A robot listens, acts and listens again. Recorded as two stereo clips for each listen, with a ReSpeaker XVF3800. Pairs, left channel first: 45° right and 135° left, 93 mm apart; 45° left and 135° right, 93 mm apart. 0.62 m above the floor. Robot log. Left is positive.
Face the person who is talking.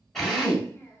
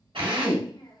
note: The child speaking: 10° left.
cmd yaw +10
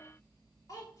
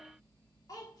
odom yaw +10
end: Found it: a child speaking, straight ahead.